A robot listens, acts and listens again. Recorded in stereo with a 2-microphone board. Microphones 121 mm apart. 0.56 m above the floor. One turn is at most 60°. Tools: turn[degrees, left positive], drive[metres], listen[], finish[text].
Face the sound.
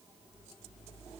Action: listen[]
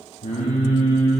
Thought: The singing: about 70° left or 110° left.
Action: turn[60]
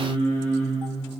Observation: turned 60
Thought: So it is at 55° left.
Action: turn[55]
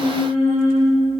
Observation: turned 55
Thought: The singing is now 10° left.
Action: turn[10]
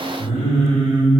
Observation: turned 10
Action: finish[Facing the singing, 2 to 4 m away.]